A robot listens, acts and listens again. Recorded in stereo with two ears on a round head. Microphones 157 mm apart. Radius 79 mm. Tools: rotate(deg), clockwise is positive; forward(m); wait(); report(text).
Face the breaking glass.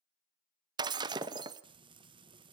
rotate(25)
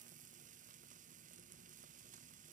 wait()
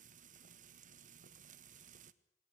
report("I heard breaking glass, but can't make it out now. It was about straight ahead or 130° right.")